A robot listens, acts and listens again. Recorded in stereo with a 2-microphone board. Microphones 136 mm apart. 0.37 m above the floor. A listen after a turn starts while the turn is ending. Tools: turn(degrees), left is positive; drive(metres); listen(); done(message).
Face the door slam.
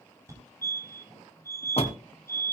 turn(degrees=50)
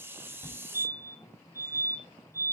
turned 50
listen()
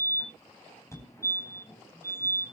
done("I heard a door slam, but can't make it out now. It was about straight ahead or 80° left.")